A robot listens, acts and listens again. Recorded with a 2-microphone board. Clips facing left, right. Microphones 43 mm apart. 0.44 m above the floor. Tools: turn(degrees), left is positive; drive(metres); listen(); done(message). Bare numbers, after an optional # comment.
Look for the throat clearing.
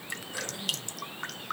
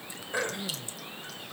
# The throat clearing: about 55° right or 125° right.
turn(-55)
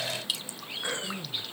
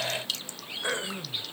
# So it is at 25° right.
turn(-25)
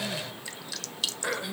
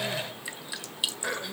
done("Facing the throat clearing, 1 to 2 m away.")